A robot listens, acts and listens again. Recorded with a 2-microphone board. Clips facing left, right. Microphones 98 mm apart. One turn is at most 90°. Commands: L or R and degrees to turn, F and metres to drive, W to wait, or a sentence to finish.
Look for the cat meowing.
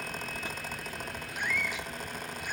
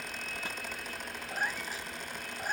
R40
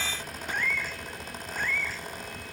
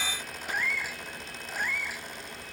R10
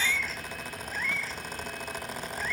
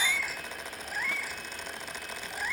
R10
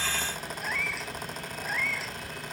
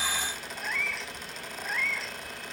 Found it: a cat meowing, straight ahead.